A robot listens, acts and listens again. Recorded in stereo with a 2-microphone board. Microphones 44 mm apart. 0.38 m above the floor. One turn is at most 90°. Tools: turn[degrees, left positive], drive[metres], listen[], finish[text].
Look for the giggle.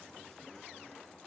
Action: listen[]
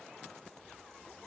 Action: listen[]
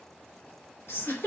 Action: turn[90]
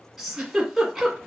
Action: finish[Found it: a giggle, straight ahead.]